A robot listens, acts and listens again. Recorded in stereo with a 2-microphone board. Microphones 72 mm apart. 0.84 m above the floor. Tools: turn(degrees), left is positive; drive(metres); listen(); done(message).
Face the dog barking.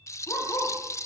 turn(degrees=50)
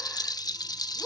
done("Found it: a dog barking, straight ahead.")